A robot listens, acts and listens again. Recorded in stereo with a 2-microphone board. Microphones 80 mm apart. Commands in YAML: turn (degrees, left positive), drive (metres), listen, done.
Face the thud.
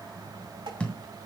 turn: 15
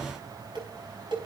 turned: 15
listen: true
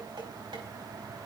done: "I heard a thud, but can't make it out now. It was about straight ahead or 150° left."